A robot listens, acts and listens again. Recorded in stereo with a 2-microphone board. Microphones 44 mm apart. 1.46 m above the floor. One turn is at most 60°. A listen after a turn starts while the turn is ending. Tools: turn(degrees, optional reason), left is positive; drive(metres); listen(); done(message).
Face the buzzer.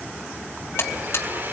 turn(degrees=55, reason="The buzzer: about 55° left or 125° left.")
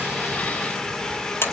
turn(degrees=60, reason="So it is at 60° left.")
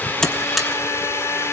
listen()
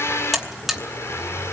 done("Facing the buzzer, 2 to 4 m away.")